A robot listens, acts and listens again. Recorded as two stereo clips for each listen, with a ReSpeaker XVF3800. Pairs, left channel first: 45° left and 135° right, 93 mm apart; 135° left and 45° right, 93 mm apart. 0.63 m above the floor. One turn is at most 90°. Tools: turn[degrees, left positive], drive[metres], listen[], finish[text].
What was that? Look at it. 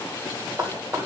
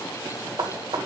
Thought: The knocking: 75° right.
Action: turn[-75]
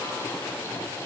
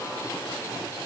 Action: listen[]
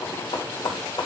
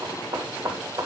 Action: finish[Facing the knocking, 2 to 4 m away.]